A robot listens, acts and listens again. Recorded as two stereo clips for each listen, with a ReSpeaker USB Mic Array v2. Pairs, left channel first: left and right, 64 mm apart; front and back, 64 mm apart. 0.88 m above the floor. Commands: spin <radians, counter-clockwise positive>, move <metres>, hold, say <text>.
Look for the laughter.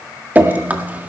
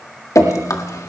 hold
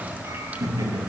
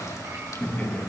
spin -1.22
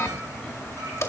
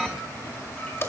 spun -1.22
hold
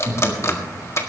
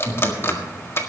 spin 0.17
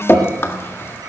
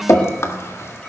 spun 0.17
hold
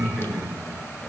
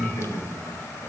say Facing the laughter.